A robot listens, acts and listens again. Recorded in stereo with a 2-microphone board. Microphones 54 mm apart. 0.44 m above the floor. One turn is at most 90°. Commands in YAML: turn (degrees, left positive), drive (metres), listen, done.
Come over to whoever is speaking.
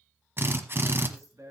turn: -70
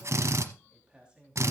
turn: -15
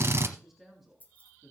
drive: 1.0
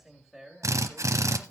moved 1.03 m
drive: 1.0
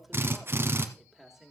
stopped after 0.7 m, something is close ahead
done: "I am next to the man speaking."